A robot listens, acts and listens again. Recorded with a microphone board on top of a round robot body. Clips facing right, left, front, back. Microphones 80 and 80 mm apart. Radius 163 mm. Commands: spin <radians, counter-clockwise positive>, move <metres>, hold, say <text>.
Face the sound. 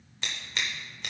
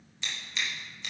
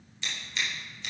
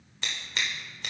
spin -2.36
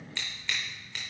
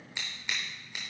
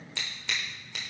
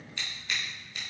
spin 0.17
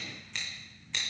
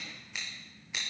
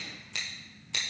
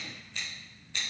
say Facing the scissors.